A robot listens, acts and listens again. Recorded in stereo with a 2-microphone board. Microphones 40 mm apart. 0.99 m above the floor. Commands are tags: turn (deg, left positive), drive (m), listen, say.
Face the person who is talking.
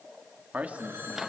<turn deg="-35"/>
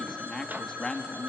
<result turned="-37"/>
<turn deg="20"/>
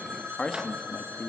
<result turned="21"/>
<turn deg="25"/>
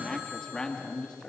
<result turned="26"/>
<turn deg="25"/>
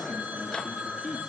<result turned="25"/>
<say>Facing the man speaking.</say>